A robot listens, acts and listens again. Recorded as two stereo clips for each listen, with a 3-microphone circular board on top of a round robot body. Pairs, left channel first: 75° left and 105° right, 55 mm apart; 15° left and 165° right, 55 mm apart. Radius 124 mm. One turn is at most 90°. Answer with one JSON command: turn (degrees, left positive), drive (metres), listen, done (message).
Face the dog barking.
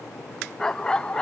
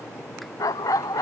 {"done": "Facing the dog barking."}